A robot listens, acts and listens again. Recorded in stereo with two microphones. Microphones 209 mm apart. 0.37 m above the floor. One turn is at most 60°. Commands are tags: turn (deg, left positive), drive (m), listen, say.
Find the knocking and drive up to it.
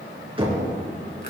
<turn deg="-25"/>
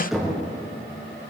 <drive m="1.0"/>
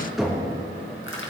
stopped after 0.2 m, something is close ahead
<say>Something is in my way. I am facing the knocking but have not reached it.</say>